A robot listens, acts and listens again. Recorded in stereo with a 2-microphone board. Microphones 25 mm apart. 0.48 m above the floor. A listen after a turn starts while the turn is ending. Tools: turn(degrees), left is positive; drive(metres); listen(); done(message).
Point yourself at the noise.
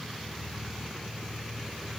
listen()
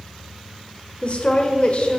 turn(degrees=55)
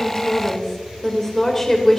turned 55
turn(degrees=20)
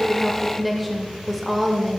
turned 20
done("Facing the woman speaking, 1 to 2 m away.")